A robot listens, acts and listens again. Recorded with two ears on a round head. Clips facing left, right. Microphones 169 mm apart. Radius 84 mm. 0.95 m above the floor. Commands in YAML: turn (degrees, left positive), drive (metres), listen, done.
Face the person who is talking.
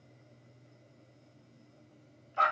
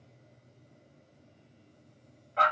listen: true
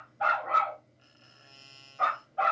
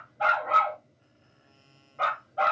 listen: true
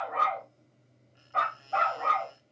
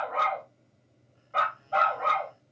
done: "I can't make out anyone speaking, only a dog barking."